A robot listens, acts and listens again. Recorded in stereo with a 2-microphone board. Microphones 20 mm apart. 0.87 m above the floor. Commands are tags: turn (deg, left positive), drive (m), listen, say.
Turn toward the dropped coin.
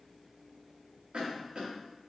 <listen/>
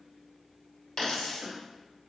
<turn deg="50"/>
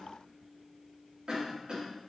<listen/>
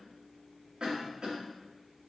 <say>I heard a dropped coin, but can't make it out now. It was about straight ahead or 80° left.</say>